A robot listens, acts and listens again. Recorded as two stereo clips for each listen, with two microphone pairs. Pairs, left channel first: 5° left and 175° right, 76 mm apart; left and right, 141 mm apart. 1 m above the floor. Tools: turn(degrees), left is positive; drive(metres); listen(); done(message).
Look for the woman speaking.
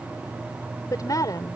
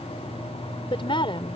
turn(degrees=40)
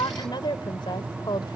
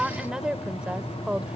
done("Found it: a woman speaking, straight ahead.")